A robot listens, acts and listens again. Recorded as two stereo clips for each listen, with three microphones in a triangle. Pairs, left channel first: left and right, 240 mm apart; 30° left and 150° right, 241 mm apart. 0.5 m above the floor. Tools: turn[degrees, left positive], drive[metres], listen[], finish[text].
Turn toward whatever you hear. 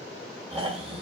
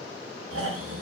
Thought: The snoring: 155° right.
Action: turn[-155]
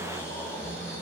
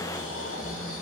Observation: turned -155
Thought: The snoring is now 10° left.
Action: turn[10]
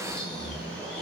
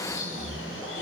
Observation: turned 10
Action: finish[Facing the snoring.]